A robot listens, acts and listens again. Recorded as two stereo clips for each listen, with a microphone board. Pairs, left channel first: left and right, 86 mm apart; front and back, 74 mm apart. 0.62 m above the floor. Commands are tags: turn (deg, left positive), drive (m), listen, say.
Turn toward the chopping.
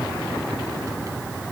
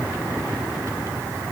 <listen/>
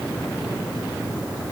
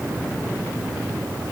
<listen/>
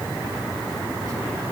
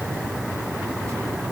<say>I can't make out chopping.</say>